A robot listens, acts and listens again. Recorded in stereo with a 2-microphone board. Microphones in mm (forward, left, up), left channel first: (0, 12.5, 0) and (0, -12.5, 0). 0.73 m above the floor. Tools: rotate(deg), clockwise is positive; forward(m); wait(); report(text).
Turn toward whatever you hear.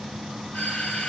rotate(-65)
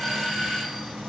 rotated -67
rotate(-10)
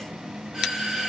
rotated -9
report("Facing the doorbell, 2 to 4 m away.")